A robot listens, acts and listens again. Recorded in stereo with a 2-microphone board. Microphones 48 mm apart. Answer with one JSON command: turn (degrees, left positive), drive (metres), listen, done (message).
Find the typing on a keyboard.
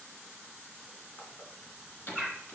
{"turn": 45}
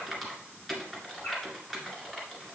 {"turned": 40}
{"done": "Facing the typing on a keyboard."}